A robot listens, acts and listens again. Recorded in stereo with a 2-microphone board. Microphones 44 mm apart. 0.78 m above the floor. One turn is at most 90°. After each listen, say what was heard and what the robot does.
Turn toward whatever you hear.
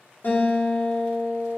The guitar: about 45° left or 135° left. Turn 45° left.
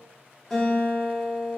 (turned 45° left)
Found it: a guitar, straight ahead, 1 to 2 m away.